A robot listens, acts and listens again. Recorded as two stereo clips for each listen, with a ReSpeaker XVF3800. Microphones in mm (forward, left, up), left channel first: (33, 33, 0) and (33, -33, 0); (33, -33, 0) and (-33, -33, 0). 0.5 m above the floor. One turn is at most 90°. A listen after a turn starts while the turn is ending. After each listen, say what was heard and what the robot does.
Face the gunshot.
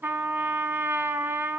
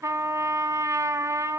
Keep listening.
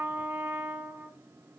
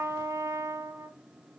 Keep listening.
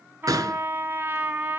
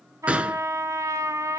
The gunshot: 110° right. Turn 90° right.
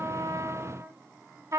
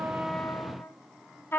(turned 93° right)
Nothing new. It was at 15° right. Turn 15° right.
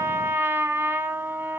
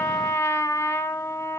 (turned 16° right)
I heard a gunshot from this way, but can't make it out now.